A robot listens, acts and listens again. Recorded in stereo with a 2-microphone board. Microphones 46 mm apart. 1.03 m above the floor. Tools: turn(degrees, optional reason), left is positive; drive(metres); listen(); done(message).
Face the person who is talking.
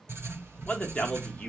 turn(degrees=25, reason="The man speaking: about 25° left or 155° left.")
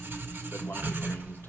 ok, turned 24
listen()
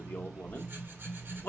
turn(degrees=130, reason="So it is at 130° left.")
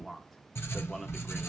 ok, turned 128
done("Found it: a man speaking, straight ahead.")